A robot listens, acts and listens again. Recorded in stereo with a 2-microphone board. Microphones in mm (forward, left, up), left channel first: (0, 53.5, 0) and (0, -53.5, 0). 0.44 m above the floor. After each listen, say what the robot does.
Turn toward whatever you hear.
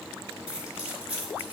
Turn 30° right.
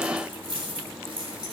Turn 130° right.
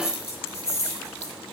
Turn 30° left.
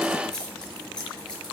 Turn 10° left.
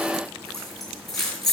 Found it: keys jangling, straight ahead.